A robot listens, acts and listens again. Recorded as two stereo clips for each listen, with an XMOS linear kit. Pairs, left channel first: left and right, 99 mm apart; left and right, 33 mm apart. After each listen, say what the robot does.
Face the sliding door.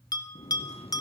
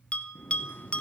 Turn 90° left.
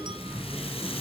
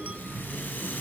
Turn 10° left.
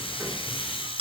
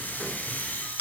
Keep listening.
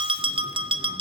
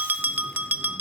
Keep listening.
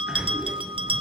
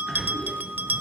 Facing the sliding door.